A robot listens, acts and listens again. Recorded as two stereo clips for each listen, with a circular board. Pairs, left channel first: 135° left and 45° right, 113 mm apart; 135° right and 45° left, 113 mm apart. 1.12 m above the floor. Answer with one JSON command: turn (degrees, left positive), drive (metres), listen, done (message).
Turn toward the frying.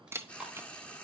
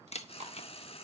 {"turn": -150}
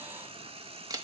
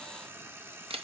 {"turn": -25}
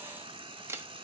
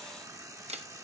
{"turn": -10}
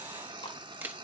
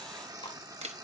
{"done": "Found it: frying, straight ahead."}